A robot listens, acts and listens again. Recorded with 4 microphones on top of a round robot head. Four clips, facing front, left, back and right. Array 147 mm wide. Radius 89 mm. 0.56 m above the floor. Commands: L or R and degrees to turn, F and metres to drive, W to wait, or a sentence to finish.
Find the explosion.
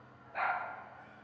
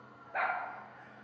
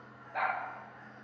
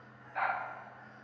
W
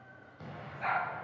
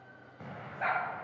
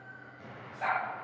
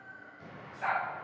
L70
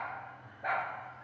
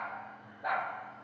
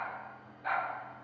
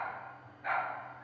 Facing where the explosion came from. I can't hear it now.